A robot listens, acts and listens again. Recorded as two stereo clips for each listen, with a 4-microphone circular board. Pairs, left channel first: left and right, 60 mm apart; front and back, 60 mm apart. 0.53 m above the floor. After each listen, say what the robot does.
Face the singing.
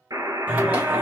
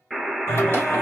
Turn 30° right.
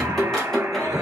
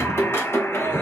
Turn 10° left.
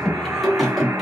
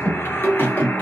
Facing the singing.